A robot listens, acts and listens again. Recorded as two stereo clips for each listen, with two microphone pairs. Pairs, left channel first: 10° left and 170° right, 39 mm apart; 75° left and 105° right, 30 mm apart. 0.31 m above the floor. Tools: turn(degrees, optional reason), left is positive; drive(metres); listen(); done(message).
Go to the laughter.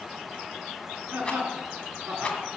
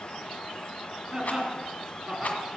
turn(degrees=-160, reason="The laughter: 160° right.")
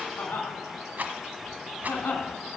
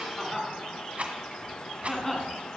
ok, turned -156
drive(metres=1.0)
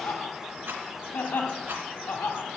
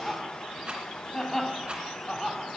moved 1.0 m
drive(metres=1.0)
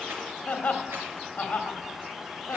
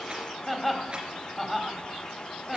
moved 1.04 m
drive(metres=1.0)
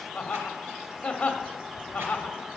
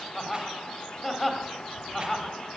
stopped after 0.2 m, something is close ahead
turn(degrees=-10, reason="The laughter is now 10° right.")
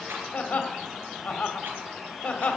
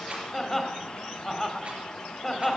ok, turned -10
done("Arrived at the laughter, straight ahead.")